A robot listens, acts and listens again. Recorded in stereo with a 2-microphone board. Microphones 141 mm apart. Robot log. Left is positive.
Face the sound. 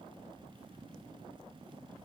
cmd idle
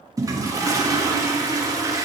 note: The toilet flushing: about 25° right or 155° right.
cmd yaw -25
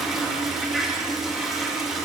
end: Found it: a toilet flushing, straight ahead.